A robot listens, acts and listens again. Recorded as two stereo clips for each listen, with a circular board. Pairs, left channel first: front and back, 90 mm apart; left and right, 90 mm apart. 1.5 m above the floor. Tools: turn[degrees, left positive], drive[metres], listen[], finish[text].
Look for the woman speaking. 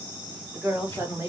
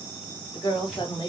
Thought: The woman speaking: 125° left.
Action: turn[125]
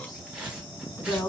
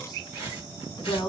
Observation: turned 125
Thought: The woman speaking is now 60° left.
Action: turn[60]
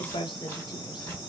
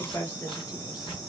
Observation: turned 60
Thought: The woman speaking is now 30° left.
Action: turn[30]
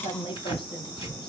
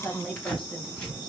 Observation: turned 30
Thought: The woman speaking is now 10° left.
Action: turn[10]
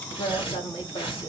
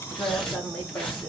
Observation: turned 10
Thought: The woman speaking is now 15° left.
Action: turn[15]
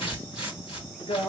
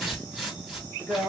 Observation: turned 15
Action: finish[Found it: a woman speaking, straight ahead.]